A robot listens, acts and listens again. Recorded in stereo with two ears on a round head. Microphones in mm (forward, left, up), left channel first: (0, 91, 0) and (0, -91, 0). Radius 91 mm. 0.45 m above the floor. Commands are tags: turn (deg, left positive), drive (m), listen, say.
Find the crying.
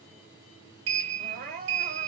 <turn deg="-45"/>
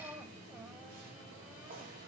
<listen/>
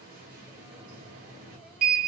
<listen/>
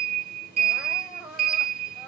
<say>Found it: crying, straight ahead.</say>